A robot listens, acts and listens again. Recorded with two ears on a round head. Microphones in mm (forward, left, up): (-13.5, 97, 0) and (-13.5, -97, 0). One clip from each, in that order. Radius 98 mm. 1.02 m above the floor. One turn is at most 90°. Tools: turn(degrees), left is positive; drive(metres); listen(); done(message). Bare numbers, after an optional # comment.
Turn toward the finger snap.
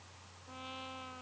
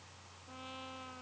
listen()
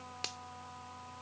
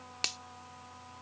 # The finger snap: about 40° right or 140° right.
turn(-40)
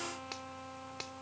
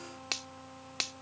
# So it is at 100° right.
turn(-90)
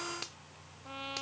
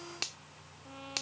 # The finger snap is now 30° right.
turn(-30)
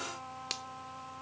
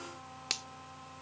# The finger snap is now 15° right.
turn(-15)
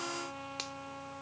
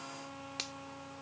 done("Found it: a finger snap, straight ahead.")